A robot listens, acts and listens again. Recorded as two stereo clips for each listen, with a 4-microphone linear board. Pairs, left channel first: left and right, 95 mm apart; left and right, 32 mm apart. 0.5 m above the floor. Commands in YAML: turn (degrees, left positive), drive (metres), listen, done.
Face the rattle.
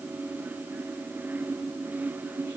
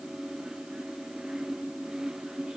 listen: true
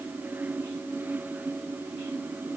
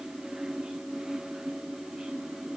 listen: true
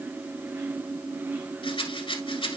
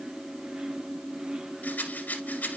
turn: 70
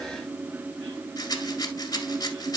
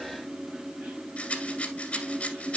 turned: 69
turn: 40
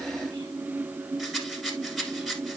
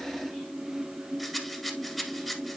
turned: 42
done: "Found it: a rattle, straight ahead, 1 to 2 m away."